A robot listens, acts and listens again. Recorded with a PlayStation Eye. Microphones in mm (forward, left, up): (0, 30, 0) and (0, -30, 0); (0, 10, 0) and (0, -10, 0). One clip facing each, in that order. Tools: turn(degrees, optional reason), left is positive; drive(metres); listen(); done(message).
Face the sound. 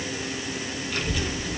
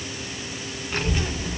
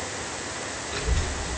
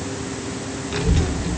turn(degrees=-30, reason="The child speaking: about 30° right or 150° right.")
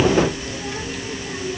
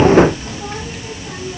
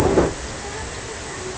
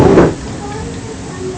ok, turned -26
turn(degrees=-30, reason="The child speaking: about 30° right or 150° right.")
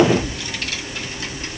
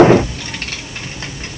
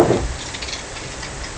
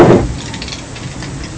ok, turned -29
turn(degrees=-35, reason="The child speaking: about 35° right or 145° right.")
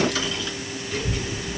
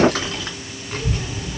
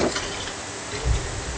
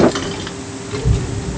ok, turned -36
turn(degrees=-125, reason="So it is at 125° right.")
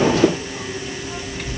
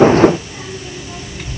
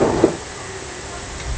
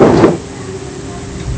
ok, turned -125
done("Facing the child speaking.")